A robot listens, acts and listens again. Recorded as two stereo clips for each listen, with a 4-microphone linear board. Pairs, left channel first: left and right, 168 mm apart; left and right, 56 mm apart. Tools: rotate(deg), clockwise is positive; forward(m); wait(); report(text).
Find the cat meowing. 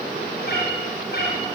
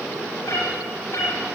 rotate(-70)
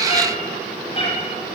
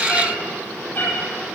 rotate(-35)
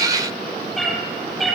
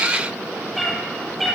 report("Found it: a cat meowing, straight ahead.")